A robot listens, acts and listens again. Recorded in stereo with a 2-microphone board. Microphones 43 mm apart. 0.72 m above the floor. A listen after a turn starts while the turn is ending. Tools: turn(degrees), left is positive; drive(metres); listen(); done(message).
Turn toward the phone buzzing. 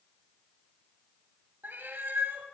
listen()
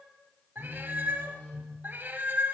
turn(degrees=40)
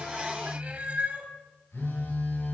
turn(degrees=100)
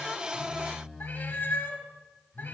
turn(degrees=-10)
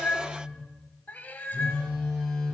done("Facing the phone buzzing, over 4 m away.")